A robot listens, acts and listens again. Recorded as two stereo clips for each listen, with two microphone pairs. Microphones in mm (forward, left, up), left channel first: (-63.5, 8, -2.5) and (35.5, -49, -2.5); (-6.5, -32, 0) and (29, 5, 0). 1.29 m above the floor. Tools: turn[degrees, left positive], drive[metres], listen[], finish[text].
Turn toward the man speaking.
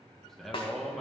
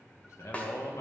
Thought: The man speaking: 125° right.
Action: turn[-125]
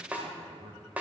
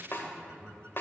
Thought: The man speaking is now 40° right.
Action: turn[-40]
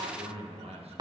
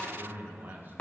Action: finish[Found it: a man speaking, straight ahead, 1 to 2 m away.]